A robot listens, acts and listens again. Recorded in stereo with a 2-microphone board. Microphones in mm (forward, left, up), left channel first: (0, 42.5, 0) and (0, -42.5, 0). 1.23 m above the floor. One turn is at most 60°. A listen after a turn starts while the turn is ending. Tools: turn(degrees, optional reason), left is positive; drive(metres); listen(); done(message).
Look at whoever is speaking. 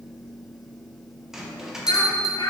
turn(degrees=60, reason="The child speaking: about 70° left or 110° left.")
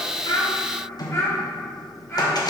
turn(degrees=30, reason="So it is at 30° left.")
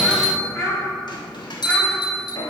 turn(degrees=10, reason="The child speaking is now 10° left.")
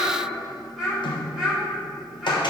done("Facing the child speaking, 2 to 4 m away.")